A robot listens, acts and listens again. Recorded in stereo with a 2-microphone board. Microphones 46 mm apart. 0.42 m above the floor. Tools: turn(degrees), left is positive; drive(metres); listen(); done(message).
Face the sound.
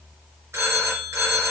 turn(degrees=-70)
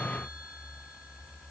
listen()
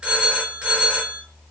turn(degrees=-20)
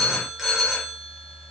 done("Facing the phone ringing, 2 to 4 m away.")